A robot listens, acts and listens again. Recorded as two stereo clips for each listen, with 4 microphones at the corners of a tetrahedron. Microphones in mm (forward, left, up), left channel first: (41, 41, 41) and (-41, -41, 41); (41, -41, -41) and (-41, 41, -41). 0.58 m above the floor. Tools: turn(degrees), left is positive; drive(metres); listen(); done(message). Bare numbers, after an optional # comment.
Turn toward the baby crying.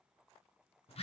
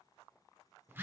listen()
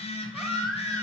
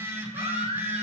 # The baby crying: 135° left.
turn(135)
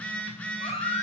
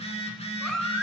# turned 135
# The baby crying is now 40° left.
turn(40)
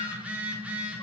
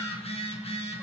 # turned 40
listen()
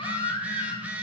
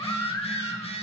# The baby crying is now 15° left.
turn(15)
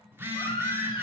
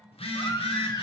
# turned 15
done("Found it: a baby crying, straight ahead.")